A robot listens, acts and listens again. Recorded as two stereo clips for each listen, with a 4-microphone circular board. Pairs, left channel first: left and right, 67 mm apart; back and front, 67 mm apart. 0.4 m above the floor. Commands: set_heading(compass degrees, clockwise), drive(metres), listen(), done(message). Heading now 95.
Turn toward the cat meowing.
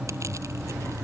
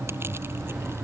listen()
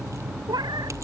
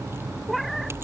set_heading(185)
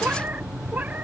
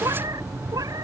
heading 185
set_heading(210)
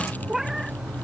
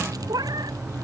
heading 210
done("Facing the cat meowing.")